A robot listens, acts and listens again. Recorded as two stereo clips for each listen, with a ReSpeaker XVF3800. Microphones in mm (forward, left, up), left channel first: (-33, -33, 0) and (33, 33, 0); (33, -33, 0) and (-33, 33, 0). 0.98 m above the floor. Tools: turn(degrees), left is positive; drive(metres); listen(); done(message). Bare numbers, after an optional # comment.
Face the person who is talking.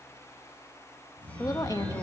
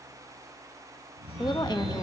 # The woman speaking: 85° right.
turn(-85)
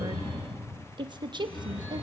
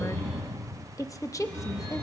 # The woman speaking is now 10° left.
turn(10)
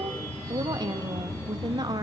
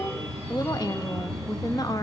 done("Found it: a woman speaking, straight ahead, under 1 m away.")